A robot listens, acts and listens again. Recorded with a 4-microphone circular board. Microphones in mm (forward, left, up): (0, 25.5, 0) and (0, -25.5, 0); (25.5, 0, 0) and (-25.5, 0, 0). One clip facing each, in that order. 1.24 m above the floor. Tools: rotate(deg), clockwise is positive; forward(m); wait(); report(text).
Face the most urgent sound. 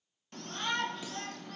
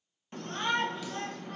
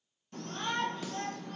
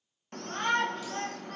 rotate(160)
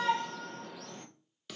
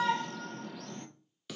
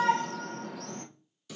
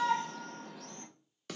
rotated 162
report("Found it: a shout, straight ahead, 1 to 2 m away.")